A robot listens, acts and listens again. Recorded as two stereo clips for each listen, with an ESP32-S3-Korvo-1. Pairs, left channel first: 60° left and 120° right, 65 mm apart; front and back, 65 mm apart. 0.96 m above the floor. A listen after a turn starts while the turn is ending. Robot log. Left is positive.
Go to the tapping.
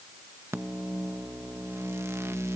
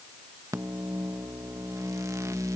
cmd idle
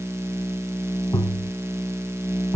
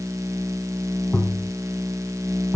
note: The tapping: 75° left.
cmd yaw +75
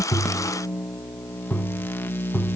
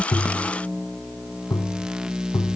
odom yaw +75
note: The tapping is now 20° right.
cmd yaw -20
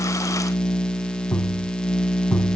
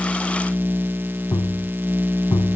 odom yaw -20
cmd fwd 1.0
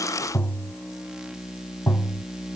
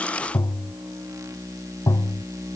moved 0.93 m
cmd fwd 1.0
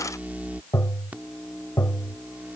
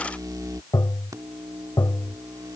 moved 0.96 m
note: The tapping is now 15° left.
cmd yaw +15
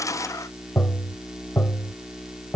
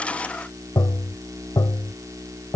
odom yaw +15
cmd fwd 1.0
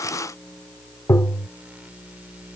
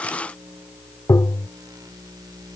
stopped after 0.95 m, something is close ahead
note: The tapping is now 15° left.
cmd yaw +15
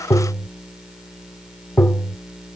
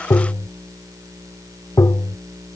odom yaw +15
end: I am next to the tapping.